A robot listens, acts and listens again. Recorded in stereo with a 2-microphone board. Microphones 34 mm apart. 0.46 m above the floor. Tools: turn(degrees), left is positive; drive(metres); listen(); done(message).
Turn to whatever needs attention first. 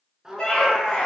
turn(degrees=20)
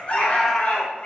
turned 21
turn(degrees=135)
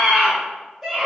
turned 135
done("Facing the scream, 1 to 2 m away.")